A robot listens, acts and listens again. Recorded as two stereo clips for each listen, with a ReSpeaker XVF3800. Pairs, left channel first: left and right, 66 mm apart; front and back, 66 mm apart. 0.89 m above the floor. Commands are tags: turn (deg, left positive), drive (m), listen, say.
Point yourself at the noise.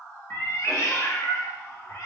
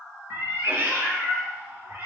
<turn deg="130"/>
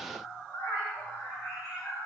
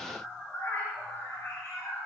<turn deg="50"/>
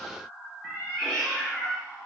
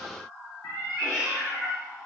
<say>Found it: a cat meowing, straight ahead, 2 to 4 m away.</say>